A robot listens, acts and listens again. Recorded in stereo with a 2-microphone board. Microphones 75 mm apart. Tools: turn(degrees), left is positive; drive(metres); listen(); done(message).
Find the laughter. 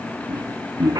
turn(degrees=-55)
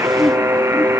done("Found it: laughter, straight ahead.")